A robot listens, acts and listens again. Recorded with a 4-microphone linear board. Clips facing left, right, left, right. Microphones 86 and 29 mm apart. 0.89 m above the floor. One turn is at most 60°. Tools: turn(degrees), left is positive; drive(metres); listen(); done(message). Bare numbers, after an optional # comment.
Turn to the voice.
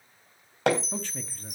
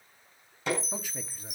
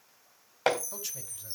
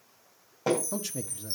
turn(-30)
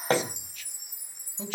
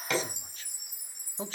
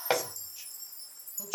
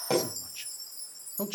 # So it is at 140° right.
turn(-60)
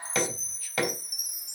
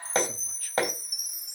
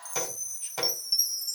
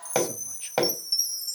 # Nothing new. It was at 80° right.
turn(-60)
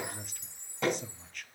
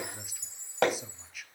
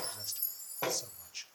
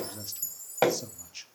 done("Facing the man speaking, 1 to 2 m away.")